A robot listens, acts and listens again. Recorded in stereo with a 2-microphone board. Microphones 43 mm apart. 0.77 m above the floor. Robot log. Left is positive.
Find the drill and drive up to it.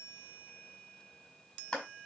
cmd idle
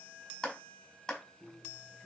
note: The drill: about 60° left or 120° left.
cmd yaw +60
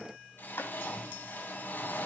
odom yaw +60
note: So it is at 60° left.
cmd yaw +60
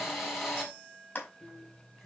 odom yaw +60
cmd fwd 1.0
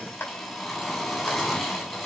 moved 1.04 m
cmd fwd 1.0
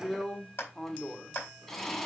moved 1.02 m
note: The drill is now 10° left.
cmd yaw +10
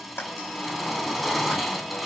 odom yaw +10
cmd fwd 1.0
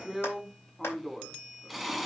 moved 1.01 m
cmd fwd 1.0
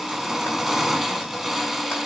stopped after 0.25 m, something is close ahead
end: I am next to the drill.